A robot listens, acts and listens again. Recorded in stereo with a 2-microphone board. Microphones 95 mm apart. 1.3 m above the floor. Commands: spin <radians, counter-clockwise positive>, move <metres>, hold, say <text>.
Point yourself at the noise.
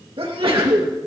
spin -1.22
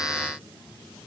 hold
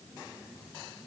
say I heard a sneeze, but can't make it out now. It was about straight ahead or 40° right.